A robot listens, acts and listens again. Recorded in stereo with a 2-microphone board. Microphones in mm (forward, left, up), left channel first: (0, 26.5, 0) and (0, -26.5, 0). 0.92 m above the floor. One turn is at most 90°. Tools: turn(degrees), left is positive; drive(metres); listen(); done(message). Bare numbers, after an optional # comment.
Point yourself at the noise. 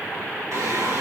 # The singing: about 65° right or 115° right.
turn(-65)
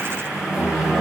# So it is at 10° right.
turn(-10)
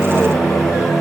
done("Facing the singing.")